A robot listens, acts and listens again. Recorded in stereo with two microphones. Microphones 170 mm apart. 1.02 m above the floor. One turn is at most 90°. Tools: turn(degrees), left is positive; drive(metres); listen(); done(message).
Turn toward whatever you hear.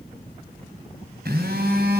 turn(degrees=-70)
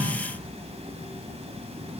turn(degrees=-40)
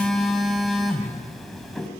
done("Facing the phone buzzing, 2 to 4 m away.")